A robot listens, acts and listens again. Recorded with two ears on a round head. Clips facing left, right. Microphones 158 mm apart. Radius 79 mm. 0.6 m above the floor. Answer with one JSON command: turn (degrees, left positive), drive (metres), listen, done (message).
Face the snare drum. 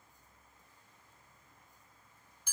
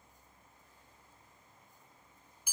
{"listen": true}
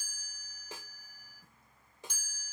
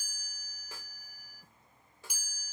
{"turn": 15}
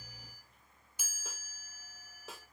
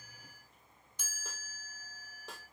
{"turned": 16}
{"listen": true}
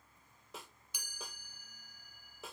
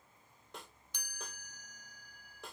{"done": "Found it: a snare drum, straight ahead."}